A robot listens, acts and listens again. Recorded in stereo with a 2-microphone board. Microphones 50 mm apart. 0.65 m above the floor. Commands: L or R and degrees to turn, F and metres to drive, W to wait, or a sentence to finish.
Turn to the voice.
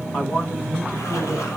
L40
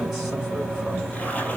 W
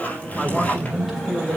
Found it: a man speaking, straight ahead.